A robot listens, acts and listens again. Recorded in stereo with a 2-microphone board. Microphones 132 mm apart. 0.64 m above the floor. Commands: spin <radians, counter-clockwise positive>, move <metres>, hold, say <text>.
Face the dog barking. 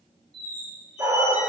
spin -0.35
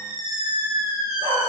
spin -2.44
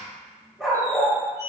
say Facing the dog barking, 1 to 2 m away.